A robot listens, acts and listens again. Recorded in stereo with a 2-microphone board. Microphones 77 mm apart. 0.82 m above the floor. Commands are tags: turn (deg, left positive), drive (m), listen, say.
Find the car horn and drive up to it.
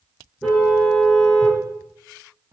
<turn deg="30"/>
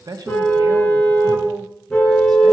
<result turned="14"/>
<turn deg="165"/>
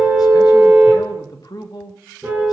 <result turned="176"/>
<turn deg="-10"/>
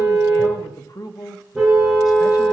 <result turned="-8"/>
<drive m="1.0"/>
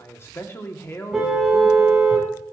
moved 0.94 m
<turn deg="-10"/>
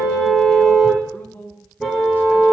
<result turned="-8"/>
<drive m="1.0"/>
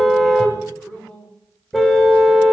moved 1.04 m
<drive m="1.0"/>
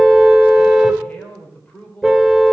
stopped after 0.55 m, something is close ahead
<say>Arrived at the car horn, straight ahead.</say>